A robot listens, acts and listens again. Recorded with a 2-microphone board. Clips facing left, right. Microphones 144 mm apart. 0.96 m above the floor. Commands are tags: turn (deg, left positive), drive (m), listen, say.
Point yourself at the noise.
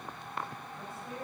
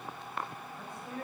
<turn deg="30"/>
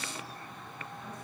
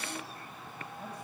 <listen/>
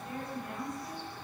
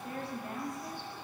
<turn deg="-35"/>
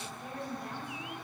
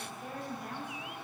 <say>Facing the woman speaking, over 4 m away.</say>